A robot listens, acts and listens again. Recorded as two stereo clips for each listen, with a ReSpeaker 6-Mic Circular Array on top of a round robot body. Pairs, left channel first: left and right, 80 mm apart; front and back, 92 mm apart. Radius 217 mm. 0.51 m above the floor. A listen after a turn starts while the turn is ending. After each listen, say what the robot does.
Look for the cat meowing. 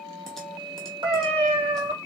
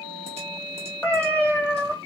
Turn 75° right.
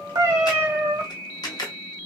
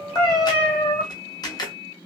Turn 30° right.
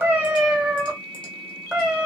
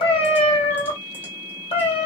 Turn 10° right.
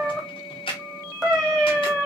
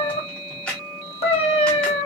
Facing the cat meowing, 1 to 2 m away.